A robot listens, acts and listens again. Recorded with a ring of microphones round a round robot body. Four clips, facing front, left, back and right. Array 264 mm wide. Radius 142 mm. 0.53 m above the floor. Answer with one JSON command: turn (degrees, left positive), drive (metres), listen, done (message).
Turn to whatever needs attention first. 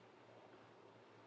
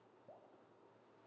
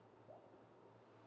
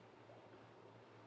{"listen": true}
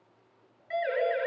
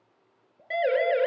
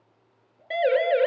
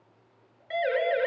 {"turn": 140}
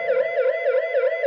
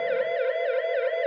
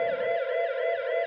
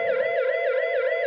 {"turn": -20}
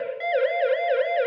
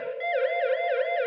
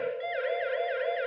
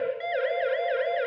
{"done": "Found it: a siren, straight ahead, over 4 m away."}